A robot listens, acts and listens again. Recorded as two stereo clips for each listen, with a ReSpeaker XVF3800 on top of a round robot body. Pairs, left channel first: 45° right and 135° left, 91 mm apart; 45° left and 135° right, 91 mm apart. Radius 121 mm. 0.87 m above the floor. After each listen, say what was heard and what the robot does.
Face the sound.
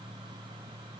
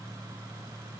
Keep listening.
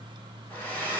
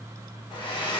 The hair dryer: 25° left. Turn 25° left.
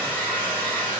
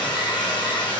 The hair dryer is now 20° left. Turn 20° left.
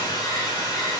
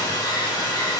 Facing the hair dryer.